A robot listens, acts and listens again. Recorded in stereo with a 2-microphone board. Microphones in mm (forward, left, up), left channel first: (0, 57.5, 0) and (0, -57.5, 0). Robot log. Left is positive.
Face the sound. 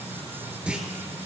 cmd yaw -30
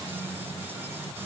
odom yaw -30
cmd idle
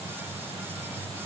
end: I heard a clunk, but can't make it out now. It was about 20° left or 140° right.